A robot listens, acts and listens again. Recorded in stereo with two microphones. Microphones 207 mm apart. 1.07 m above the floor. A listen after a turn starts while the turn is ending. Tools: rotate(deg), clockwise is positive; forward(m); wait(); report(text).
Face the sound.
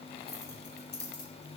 rotate(-60)
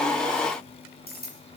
rotate(-50)
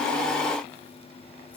wait()
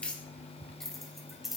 report("Found it: keys jangling, straight ahead, over 4 m away.")